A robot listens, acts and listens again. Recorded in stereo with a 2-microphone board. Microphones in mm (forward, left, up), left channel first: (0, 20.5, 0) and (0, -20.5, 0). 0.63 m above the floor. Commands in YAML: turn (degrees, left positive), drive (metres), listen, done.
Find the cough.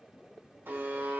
listen: true
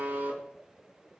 listen: true
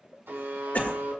turn: 45
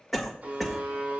done: "Found it: a cough, straight ahead, 1 to 2 m away."